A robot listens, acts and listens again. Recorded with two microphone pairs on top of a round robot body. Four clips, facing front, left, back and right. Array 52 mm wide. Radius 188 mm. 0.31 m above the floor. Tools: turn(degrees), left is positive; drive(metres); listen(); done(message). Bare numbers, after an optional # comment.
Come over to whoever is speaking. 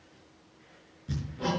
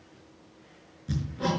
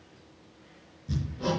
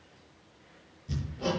listen()
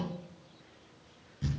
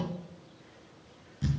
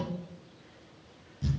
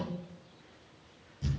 listen()
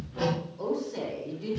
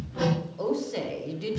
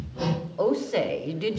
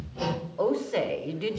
# The woman speaking: 150° right.
turn(-150)
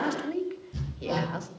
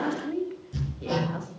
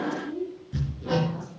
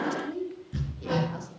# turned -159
# The woman speaking is now 10° left.
turn(10)
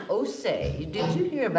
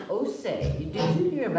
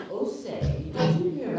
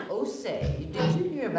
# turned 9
drive(1.0)
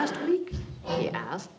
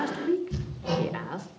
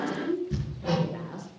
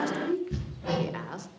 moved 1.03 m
drive(1.0)
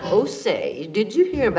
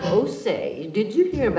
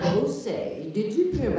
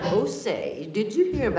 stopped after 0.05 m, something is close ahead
done("Arrived at the woman speaking, straight ahead.")